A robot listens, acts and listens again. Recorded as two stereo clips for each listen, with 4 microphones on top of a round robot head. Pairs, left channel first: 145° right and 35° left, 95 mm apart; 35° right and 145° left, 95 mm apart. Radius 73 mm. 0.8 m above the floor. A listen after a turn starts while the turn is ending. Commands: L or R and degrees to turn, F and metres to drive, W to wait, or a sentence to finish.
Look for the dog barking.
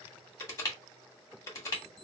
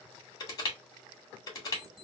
W
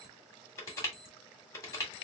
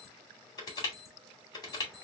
W
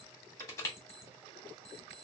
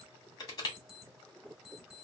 I can't make out a dog barking to turn to.